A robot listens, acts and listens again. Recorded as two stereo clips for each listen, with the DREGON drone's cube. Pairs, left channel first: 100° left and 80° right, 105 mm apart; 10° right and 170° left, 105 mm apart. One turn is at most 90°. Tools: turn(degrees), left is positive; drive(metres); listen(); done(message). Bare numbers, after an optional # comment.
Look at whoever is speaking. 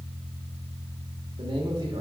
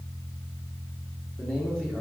# The man speaking: 90° right.
turn(-90)
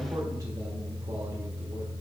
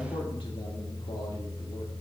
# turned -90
listen()
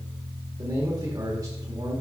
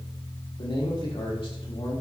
# The man speaking is now 30° right.
turn(-30)
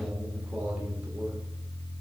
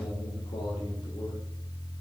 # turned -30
done("Facing the man speaking, 1 to 2 m away.")